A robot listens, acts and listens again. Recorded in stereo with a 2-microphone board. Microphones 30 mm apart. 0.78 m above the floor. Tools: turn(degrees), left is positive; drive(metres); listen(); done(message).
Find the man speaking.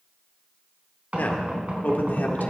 turn(degrees=70)
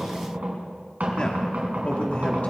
turn(degrees=50)
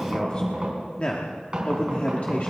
turn(degrees=50)
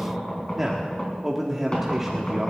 turn(degrees=-10)
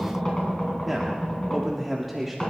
done("Found it: a man speaking, straight ahead.")